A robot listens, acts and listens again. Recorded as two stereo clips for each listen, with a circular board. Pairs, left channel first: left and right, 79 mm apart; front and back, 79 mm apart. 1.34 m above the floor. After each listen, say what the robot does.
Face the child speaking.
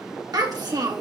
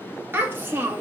Turn 120° right.
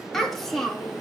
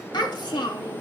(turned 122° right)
Facing the child speaking.